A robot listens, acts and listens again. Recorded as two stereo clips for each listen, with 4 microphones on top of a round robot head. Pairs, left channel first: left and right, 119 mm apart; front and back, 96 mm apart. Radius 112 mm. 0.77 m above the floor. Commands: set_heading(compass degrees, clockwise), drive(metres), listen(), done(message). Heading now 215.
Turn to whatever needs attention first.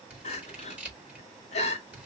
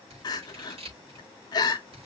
set_heading(175)
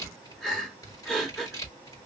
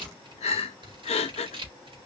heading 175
done("Found it: crying, straight ahead.")